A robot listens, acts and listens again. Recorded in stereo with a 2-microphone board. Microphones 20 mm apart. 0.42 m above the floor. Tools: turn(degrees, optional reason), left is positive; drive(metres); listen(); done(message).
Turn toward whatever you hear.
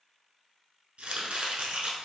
turn(degrees=-75, reason="The chopping: about 75° right or 105° right.")
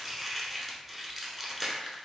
turn(degrees=-15, reason="So it is at 15° right.")
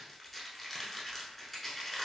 done("Facing the chopping, under 1 m away.")